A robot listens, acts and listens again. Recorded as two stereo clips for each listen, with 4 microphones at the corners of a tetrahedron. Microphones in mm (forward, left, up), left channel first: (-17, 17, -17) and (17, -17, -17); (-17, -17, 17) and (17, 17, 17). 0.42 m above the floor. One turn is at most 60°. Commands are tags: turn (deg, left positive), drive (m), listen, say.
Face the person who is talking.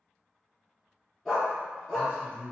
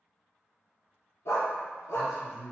<turn deg="60"/>
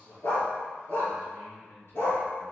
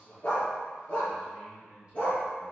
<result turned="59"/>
<turn deg="60"/>
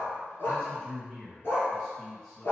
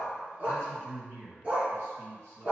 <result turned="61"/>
<turn deg="55"/>
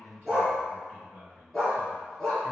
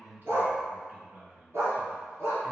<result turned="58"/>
<say>Facing the man speaking, 2 to 4 m away.</say>